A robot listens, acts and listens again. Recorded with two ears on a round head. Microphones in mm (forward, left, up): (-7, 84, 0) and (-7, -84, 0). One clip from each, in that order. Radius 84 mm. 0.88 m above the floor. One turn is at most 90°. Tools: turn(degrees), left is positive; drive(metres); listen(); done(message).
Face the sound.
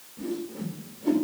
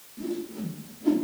turn(degrees=-25)
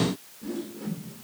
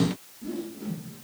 done("Found it: a whoosh, straight ahead, 2 to 4 m away.")